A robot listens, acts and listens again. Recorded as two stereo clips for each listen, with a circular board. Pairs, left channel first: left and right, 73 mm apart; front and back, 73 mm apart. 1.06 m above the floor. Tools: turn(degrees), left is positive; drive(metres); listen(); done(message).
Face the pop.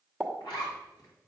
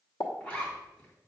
turn(degrees=10)
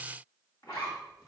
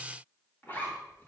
done("I heard a pop from this way, but can't make it out now.")